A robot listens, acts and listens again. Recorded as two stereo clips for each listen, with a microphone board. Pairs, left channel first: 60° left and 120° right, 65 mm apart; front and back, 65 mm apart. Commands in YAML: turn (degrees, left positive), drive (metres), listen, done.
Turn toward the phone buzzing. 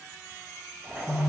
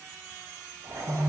turn: 135
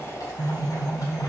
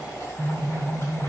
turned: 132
done: "Facing the phone buzzing."